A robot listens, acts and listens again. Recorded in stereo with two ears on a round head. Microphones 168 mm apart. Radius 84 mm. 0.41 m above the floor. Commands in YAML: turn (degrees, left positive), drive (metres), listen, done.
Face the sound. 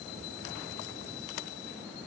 listen: true
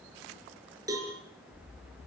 turn: -20
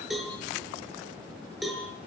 done: "Facing the cowbell."